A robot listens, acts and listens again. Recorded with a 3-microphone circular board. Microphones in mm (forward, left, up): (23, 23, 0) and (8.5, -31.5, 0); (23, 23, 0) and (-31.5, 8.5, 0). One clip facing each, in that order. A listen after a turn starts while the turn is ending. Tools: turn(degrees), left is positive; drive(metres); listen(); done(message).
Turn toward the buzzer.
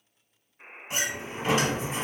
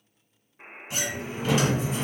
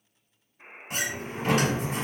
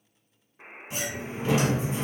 turn(degrees=-165)
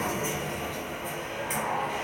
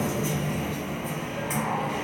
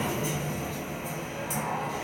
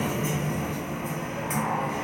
listen()
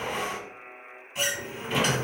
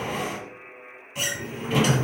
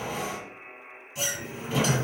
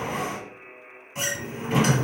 turn(degrees=-30)
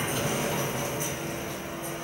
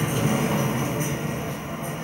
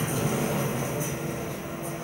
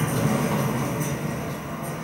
listen()
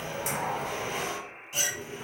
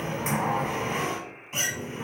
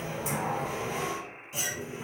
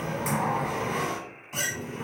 turn(degrees=10)
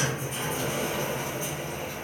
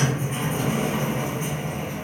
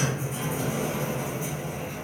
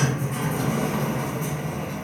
listen()
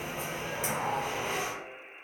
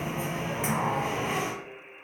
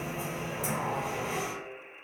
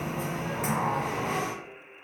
done("Found it: a buzzer, straight ahead.")